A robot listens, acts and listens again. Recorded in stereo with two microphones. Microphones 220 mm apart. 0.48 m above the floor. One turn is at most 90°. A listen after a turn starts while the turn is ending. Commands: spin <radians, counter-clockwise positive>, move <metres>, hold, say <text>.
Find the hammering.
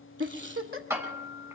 spin -0.52
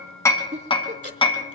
spin 0.35
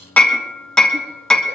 say Facing the hammering.